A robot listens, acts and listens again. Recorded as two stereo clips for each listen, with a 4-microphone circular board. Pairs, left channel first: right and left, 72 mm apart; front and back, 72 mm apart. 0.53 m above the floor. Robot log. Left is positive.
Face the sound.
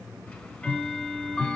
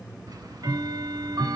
note: The ticking: 170° right.
cmd yaw -170
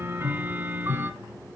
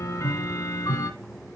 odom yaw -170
note: The ticking is now 30° left.
cmd yaw +30
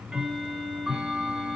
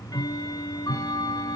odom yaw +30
end: Facing the ticking.